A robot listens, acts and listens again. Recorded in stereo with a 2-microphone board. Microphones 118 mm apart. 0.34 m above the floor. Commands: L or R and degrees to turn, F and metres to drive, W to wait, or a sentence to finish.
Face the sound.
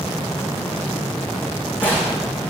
L30
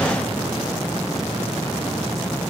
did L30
W
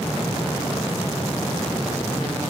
I heard a gunshot, but can't make it out now. It was about 15° right or 135° left.